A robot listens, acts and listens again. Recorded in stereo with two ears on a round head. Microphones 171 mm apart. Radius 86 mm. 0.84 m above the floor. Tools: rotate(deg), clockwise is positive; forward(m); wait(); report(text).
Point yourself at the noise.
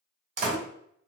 rotate(40)
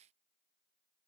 wait()
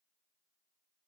report("I heard a door slam, but can't make it out now. It was about straight ahead or 100° right.")